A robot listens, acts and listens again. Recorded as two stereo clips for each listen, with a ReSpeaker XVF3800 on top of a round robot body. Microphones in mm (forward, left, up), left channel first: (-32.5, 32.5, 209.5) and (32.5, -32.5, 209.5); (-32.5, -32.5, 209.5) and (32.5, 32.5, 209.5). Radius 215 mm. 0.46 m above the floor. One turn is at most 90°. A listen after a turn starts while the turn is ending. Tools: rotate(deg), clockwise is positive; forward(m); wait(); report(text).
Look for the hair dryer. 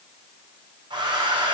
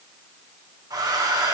report("Facing the hair dryer, 1 to 2 m away.")